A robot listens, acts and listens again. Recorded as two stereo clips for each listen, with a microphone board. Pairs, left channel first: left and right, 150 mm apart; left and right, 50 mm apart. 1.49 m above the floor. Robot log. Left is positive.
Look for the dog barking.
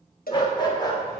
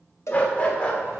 note: The dog barking: about 25° left or 155° left.
cmd yaw +25
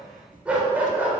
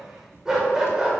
note: So it is at 15° right.
cmd yaw -15
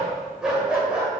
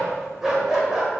note: The dog barking is now 10° right.
cmd yaw -10
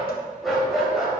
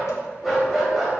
end: Found it: a dog barking, straight ahead.